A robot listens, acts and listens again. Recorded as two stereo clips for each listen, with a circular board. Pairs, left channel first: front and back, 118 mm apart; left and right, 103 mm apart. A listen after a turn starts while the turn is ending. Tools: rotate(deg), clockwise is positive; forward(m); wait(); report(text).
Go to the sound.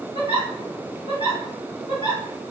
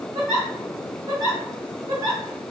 rotate(40)
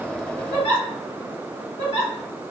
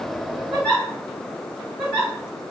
forward(1.0)
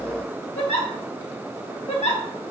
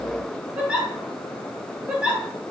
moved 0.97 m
rotate(15)
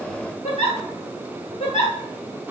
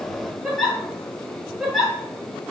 forward(1.0)
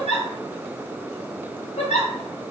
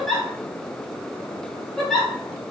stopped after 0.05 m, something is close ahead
report("Arrived at the giggle, straight ahead.")